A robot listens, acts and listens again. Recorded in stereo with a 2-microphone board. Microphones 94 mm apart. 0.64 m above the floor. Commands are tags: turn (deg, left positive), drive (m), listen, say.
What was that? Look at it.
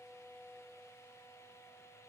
<listen/>
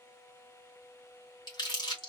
<turn deg="50"/>
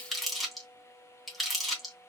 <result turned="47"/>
<say>Facing the crumpling, 1 to 2 m away.</say>